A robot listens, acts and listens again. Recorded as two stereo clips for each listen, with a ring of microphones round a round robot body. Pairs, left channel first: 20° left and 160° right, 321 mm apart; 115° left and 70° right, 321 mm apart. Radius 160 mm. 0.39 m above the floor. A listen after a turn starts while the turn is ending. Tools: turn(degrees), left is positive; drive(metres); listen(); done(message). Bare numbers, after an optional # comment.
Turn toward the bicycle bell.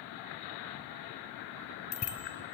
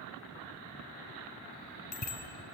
# The bicycle bell: 55° left.
turn(55)
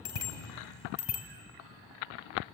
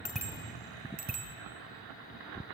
done("Facing the bicycle bell, 2 to 4 m away.")